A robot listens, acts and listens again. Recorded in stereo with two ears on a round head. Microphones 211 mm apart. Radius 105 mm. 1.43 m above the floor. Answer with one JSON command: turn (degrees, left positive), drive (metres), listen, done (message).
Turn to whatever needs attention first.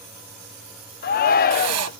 {"turn": 40}
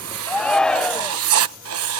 {"done": "Facing the shout."}